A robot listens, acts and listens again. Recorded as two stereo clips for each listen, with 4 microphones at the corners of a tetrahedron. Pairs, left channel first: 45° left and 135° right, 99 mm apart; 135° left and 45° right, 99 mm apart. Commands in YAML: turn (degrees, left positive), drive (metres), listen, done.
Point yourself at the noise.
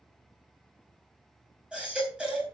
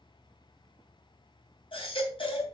turn: 145
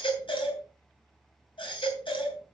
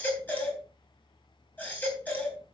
turn: 65
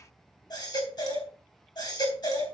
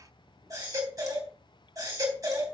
done: "Facing the baby crying, 2 to 4 m away."